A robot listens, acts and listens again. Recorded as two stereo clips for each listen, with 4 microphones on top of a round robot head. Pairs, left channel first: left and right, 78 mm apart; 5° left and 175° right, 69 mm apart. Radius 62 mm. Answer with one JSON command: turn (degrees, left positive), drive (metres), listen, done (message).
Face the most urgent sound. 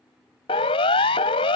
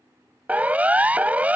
{"turn": 115}
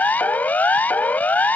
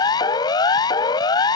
{"turn": 20}
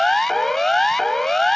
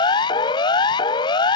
{"done": "Facing the siren."}